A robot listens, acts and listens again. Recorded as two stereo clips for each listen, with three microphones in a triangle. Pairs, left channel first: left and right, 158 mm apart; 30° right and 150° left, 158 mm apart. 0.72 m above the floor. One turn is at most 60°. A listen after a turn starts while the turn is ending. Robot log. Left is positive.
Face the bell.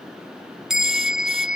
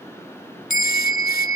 end: Found it: a bell, straight ahead.